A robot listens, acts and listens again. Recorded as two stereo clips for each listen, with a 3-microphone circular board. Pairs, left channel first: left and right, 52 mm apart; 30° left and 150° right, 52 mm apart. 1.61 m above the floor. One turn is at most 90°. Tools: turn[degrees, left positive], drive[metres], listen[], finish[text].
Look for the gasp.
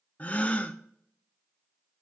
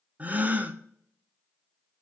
Thought: The gasp: 150° left.
Action: turn[90]
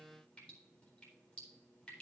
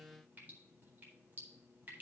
Thought: Nothing new. It was at 60° left.
Action: turn[60]
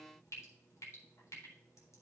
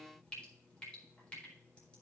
Action: finish[Facing where the gasp came from. I can't hear it now.]